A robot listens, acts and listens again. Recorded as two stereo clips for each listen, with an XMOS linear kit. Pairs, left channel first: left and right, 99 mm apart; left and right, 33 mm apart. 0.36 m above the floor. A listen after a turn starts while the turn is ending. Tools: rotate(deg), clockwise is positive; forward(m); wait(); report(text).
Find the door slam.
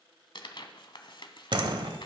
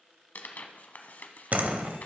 rotate(50)
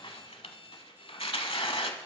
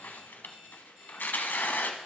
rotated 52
wait()
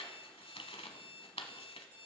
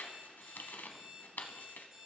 report("I heard a door slam, but can't make it out now. It was about straight ahead or 75° right.")